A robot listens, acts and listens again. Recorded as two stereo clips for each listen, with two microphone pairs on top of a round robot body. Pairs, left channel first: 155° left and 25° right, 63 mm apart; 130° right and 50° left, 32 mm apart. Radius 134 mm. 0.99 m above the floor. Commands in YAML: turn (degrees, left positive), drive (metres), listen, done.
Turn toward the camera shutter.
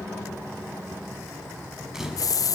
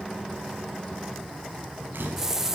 turn: 55
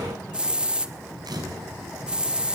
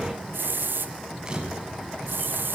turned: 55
turn: -20
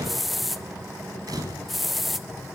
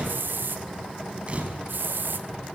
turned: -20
done: "Found it: a camera shutter, straight ahead, over 4 m away."